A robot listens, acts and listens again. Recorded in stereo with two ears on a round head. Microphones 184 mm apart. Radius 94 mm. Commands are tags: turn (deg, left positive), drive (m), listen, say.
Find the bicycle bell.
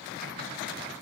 <listen/>
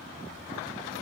<listen/>
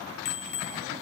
<turn deg="55"/>
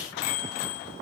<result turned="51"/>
<turn deg="70"/>
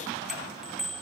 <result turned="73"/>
<say>Found it: a bicycle bell, straight ahead, 2 to 4 m away.</say>